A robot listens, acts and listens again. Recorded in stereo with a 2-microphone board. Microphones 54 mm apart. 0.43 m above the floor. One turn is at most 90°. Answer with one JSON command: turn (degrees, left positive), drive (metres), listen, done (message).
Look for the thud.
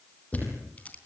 {"turn": 30}
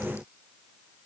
{"listen": true}
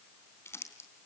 {"done": "I heard a thud, but can't make it out now. It was about straight ahead or 120° left."}